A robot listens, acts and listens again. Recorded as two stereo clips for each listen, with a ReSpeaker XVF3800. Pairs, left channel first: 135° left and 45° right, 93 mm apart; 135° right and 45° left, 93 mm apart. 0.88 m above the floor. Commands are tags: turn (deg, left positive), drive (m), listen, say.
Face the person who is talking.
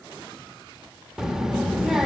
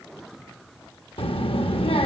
<turn deg="-130"/>
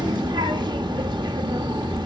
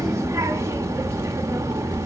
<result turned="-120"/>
<turn deg="-10"/>
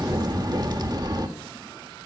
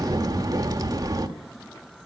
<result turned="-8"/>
<say>Facing the child speaking, 1 to 2 m away.</say>